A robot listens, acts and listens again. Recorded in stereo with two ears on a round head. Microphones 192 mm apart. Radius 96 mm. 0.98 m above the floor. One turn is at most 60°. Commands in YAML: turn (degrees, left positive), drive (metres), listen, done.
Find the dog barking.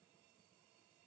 listen: true
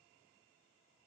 listen: true
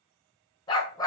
turn: 15
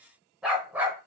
turn: -10
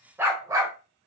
turn: -15
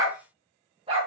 turn: -30
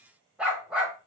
done: "Facing the dog barking."